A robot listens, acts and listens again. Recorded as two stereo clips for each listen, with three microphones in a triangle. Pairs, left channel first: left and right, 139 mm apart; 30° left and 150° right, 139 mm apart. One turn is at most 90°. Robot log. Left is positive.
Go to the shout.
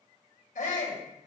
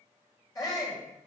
note: The shout: 90° left.
cmd yaw +90
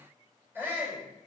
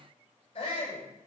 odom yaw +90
note: The shout is now 15° right.
cmd yaw -15
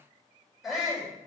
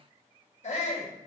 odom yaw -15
cmd fwd 1.0
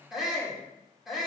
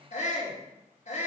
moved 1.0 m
cmd fwd 1.0
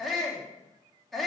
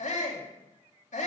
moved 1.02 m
cmd fwd 1.0
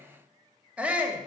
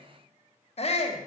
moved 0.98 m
note: The shout is now 10° right.
cmd yaw -10
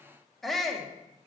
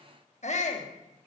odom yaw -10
cmd fwd 1.0
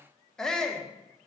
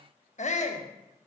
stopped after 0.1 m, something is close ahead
end: I am next to the shout.